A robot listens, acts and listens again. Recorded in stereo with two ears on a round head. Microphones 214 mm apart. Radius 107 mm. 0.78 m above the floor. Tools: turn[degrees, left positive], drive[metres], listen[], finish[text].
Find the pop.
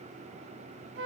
Action: listen[]
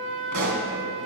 Action: turn[-90]
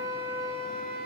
Action: finish[I heard a pop from this way, but can't make it out now.]